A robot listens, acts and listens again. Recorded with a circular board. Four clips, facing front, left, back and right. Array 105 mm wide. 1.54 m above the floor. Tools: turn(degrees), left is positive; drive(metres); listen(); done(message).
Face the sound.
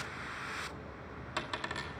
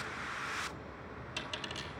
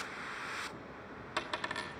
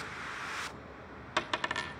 turn(degrees=-95)
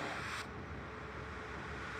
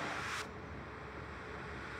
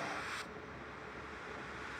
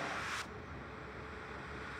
done("I heard a dropped coin from this way, but can't make it out now.")